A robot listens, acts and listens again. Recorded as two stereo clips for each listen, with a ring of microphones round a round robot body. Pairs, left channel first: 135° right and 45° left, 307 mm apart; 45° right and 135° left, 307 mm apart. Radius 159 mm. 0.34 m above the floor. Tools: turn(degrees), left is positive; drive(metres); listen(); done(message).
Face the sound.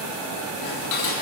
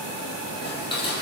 turn(degrees=-120)
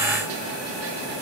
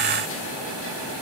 listen()
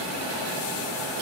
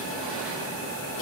listen()
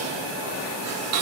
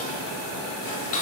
done("Found it: dishes clattering, straight ahead, over 4 m away.")